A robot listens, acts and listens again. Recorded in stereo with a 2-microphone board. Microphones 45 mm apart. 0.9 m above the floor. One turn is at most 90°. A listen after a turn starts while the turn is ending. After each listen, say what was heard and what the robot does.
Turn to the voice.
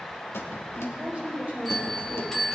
The woman speaking: about 35° right or 145° right. Turn 35° right.
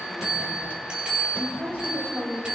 So it is at 110° right. Turn 90° right.
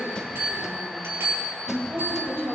The woman speaking is now 55° right. Turn 55° right.
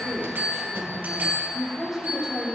Found it: a woman speaking, straight ahead.